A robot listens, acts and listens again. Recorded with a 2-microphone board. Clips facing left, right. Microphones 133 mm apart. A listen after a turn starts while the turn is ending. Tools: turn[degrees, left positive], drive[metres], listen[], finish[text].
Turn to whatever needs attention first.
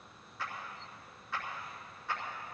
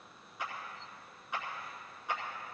Action: listen[]
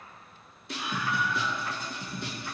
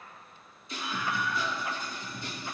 Thought: The scream: about 65° left or 115° left.
Action: turn[65]
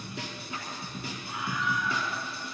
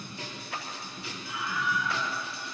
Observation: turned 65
Thought: So it is at 50° left.
Action: turn[50]
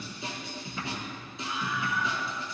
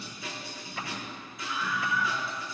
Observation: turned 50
Thought: The scream is now 25° left.
Action: turn[25]
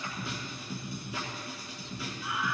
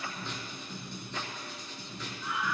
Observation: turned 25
Thought: The scream is now 10° left.
Action: turn[10]
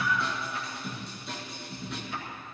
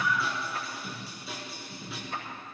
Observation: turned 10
Action: finish[Found it: a scream, straight ahead.]